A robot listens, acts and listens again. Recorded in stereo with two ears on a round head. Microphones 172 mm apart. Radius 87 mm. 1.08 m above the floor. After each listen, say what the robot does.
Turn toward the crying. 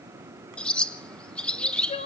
Turn 35° left.
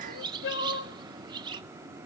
Turn 110° left.
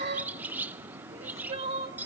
Turn 30° right.
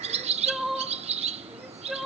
Found it: crying, straight ahead.